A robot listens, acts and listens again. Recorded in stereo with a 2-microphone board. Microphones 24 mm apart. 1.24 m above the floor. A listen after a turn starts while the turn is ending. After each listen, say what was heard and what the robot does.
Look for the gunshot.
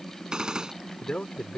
The gunshot: about 35° right or 145° right. Turn 35° right.
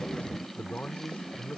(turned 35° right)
Keep listening.
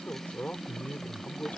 I heard a gunshot, but can't make it out now. It was about straight ahead or 110° right.